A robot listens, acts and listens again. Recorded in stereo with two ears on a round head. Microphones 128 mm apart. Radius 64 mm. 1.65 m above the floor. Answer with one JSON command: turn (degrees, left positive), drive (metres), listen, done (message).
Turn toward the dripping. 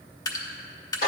{"turn": 25}
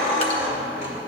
{"listen": true}
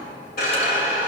{"listen": true}
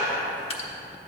{"turn": 125}
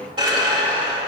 {"listen": true}
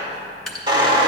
{"done": "Found it: dripping, straight ahead."}